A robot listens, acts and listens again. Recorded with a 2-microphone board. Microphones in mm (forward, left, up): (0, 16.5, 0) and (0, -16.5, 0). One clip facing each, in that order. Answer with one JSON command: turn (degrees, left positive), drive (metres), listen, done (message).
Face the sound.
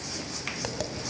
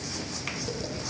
{"turn": 70}
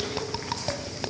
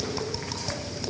{"turn": 35}
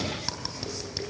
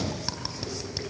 {"done": "Found it: tapping, straight ahead, 2 to 4 m away."}